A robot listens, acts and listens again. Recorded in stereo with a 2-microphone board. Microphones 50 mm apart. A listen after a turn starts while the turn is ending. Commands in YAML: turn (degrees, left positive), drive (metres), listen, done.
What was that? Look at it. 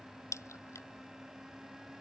turn: 70
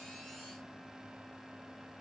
listen: true
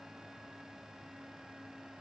done: "I heard a crack, but can't make it out now. It was about straight ahead or 40° left."